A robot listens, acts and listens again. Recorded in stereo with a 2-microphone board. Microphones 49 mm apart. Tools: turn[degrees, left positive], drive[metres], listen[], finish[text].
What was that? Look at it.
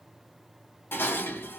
Thought: The dishes clattering: about 50° left or 130° left.
Action: turn[50]
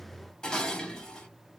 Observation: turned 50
Thought: So it is at 20° left.
Action: turn[20]
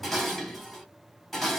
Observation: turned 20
Action: finish[Found it: dishes clattering, straight ahead, 1 to 2 m away.]